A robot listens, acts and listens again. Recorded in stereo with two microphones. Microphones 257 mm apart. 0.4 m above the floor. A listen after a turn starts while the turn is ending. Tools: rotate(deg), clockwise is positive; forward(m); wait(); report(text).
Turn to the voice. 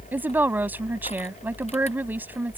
rotate(30)
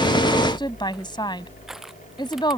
rotate(-20)
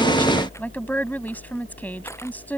rotate(-10)
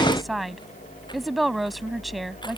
report("Found it: a woman speaking, straight ahead.")